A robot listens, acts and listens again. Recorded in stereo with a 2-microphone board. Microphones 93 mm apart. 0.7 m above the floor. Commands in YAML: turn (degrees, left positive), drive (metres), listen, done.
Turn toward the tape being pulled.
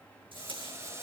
turn: -70
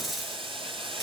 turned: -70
done: "Found it: tape being pulled, straight ahead, over 4 m away."